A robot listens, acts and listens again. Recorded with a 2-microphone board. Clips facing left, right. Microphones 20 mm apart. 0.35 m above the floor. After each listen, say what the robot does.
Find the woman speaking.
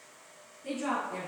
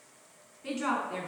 Turn 50° right.
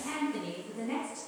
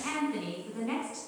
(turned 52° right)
Turn 70° right.
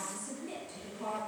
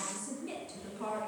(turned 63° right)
Turn 30° right.
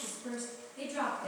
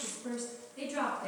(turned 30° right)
Turn 10° right.
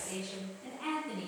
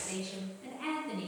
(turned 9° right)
Found it: a woman speaking, straight ahead.